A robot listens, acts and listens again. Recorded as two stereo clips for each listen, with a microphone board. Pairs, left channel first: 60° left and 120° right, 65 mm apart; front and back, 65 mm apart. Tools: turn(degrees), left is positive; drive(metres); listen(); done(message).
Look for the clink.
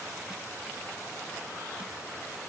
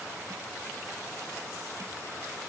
listen()
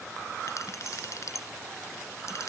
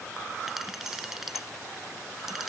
turn(degrees=95)
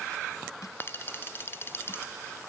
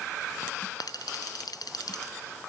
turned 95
done("Found it: a clink, straight ahead.")